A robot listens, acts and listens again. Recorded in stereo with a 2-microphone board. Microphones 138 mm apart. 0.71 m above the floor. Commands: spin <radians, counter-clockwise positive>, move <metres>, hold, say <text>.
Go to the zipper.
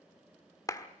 hold
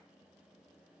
hold
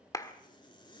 spin 0.61
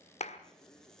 move 1.0
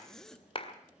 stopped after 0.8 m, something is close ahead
say I am next to the zipper.